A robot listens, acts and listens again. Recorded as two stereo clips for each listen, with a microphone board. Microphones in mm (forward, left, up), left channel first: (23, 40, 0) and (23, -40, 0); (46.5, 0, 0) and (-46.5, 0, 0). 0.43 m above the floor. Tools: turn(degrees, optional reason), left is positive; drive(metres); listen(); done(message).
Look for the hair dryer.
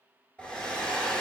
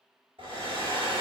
turn(degrees=165, reason="The hair dryer: 165° left.")
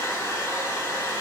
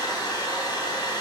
turn(degrees=35, reason="The hair dryer is now 35° left.")
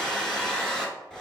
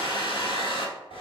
done("Found it: a hair dryer, straight ahead, under 1 m away.")